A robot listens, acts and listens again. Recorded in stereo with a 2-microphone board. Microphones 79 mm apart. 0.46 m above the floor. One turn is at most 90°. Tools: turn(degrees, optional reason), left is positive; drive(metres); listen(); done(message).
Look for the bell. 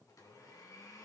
listen()
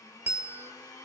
turn(degrees=-20, reason="The bell: about 20° right or 160° right.")
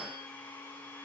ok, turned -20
listen()
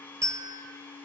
turn(degrees=-90, reason="So it is at 135° right.")
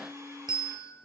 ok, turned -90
turn(degrees=-75, reason="The bell is now 75° right.")
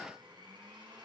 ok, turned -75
listen()
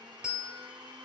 turn(degrees=-10, reason="The bell is now 10° right.")
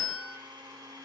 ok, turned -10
done("Facing the bell.")